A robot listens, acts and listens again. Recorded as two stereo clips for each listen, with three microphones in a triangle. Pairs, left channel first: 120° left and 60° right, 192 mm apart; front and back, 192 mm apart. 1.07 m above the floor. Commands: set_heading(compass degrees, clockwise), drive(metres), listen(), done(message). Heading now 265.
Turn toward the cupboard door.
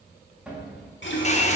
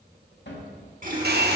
set_heading(240)
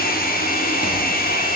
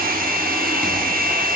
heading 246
listen()
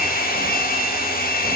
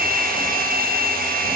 listen()
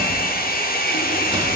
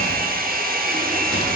done("I heard a cupboard door from this way, but can't make it out now.")